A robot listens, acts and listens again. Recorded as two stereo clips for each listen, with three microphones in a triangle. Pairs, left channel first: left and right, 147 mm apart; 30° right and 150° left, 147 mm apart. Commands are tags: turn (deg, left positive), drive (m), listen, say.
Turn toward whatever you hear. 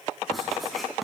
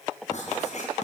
<listen/>
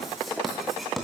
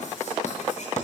<say>Found it: writing, straight ahead.</say>